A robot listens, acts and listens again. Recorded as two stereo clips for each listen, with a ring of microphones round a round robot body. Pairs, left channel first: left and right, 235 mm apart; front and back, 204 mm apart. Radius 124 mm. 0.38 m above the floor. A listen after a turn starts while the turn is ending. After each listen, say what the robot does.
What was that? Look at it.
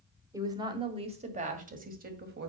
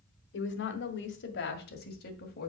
Turn 45° right.
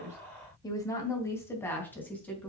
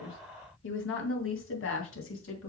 Facing the woman speaking, 2 to 4 m away.